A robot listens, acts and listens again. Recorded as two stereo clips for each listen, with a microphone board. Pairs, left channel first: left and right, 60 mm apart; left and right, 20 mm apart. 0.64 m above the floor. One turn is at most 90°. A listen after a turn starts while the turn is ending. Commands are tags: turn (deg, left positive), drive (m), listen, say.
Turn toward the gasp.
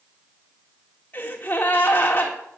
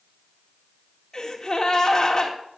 <turn deg="30"/>
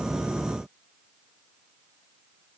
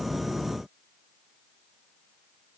<listen/>
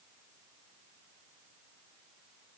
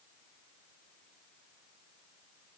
<say>I heard a gasp, but can't make it out now. It was about straight ahead or 120° left.</say>